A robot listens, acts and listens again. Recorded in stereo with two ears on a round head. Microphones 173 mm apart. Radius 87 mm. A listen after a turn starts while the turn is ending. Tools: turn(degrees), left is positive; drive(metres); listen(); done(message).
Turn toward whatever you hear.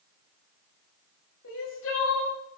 turn(degrees=70)
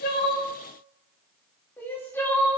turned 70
turn(degrees=10)
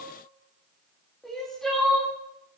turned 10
done("Found it: crying, straight ahead, 2 to 4 m away.")